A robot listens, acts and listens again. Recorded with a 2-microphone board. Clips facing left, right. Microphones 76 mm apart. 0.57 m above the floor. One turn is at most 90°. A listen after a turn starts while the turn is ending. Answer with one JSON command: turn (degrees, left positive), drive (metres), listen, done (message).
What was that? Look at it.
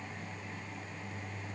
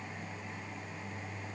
{"listen": true}
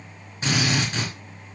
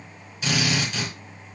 {"turn": 40}
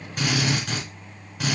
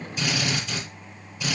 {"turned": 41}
{"turn": 90}
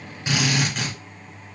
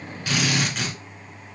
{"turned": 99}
{"done": "Facing the drill."}